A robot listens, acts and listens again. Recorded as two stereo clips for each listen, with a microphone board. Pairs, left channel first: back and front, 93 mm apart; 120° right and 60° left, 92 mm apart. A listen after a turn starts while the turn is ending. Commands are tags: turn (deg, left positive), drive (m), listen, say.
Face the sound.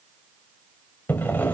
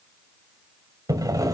<turn deg="110"/>
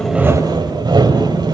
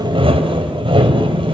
<turn deg="35"/>
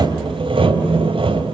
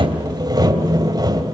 <turn deg="15"/>
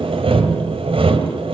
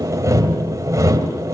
<say>Found it: sawing, straight ahead, 2 to 4 m away.</say>